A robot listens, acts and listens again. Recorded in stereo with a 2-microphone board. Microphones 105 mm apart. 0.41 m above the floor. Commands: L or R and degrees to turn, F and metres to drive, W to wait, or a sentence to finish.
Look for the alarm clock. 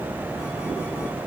W
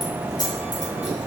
W
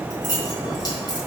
I can't make out an alarm clock to turn to.